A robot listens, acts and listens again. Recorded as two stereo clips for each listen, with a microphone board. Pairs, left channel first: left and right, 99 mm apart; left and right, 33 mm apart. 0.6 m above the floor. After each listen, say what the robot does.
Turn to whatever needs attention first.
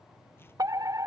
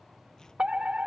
Turn 40° right.
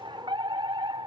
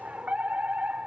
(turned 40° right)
Turn 90° right.
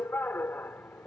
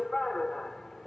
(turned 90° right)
Turn 25° left.
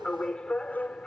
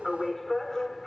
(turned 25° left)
Turn 10° left.
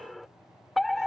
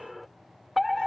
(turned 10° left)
Facing the fire alarm.